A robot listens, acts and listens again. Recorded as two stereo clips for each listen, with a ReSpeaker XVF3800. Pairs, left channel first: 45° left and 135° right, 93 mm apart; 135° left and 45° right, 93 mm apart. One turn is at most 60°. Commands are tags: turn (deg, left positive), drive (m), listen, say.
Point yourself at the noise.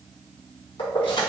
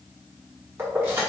<turn deg="25"/>
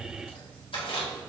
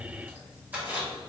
<turn deg="30"/>
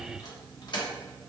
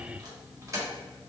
<turn deg="10"/>
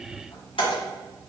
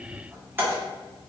<turn deg="25"/>
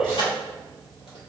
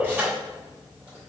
<turn deg="25"/>
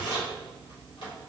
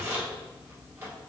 <turn deg="20"/>
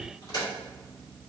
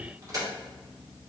<say>Facing the keys jangling, 1 to 2 m away.</say>